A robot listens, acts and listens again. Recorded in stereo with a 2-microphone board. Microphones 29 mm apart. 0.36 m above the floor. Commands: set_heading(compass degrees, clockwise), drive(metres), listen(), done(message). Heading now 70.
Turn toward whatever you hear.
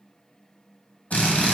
set_heading(10)
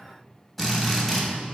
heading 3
set_heading(353)
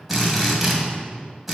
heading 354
done("Found it: a drill, straight ahead, 2 to 4 m away.")